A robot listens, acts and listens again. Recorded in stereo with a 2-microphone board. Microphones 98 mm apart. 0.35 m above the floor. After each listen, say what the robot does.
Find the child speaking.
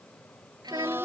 Turn 45° right.
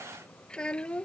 Turn 10° left.
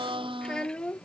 Turn 10° left.
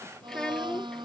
Facing the child speaking.